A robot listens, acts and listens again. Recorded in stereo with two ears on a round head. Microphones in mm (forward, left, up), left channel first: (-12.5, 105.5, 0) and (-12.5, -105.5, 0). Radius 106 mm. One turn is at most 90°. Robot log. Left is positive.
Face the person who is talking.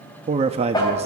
note: The man speaking: about 25° right or 155° right.
cmd yaw -25
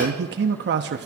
note: So it is at 125° right.
cmd yaw -90
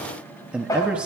end: Found it: a man speaking, straight ahead, 1 to 2 m away.